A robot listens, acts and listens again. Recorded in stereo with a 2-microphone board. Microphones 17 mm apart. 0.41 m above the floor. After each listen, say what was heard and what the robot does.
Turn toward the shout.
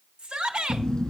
The shout: about 65° right or 115° right. Turn 65° right.
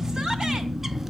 Keep listening.
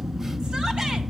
Keep listening.
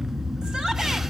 I heard a shout, but can't make it out now. It was about straight ahead or 50° right.